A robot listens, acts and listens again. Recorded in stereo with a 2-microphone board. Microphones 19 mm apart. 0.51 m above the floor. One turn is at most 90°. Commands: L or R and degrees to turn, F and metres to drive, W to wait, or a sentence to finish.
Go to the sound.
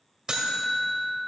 R30
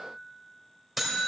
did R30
F1.0
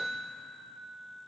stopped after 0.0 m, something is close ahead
Blocked. The buzzer is further on, straight ahead.